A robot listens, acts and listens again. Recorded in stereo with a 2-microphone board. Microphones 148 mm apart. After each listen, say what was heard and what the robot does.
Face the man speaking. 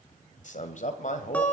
The man speaking: about 55° left or 125° left. Turn 55° left.
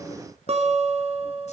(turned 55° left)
Keep listening.
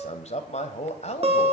So it is at 60° left. Turn 60° left.
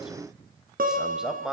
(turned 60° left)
Found it: a man speaking, straight ahead, 1 to 2 m away.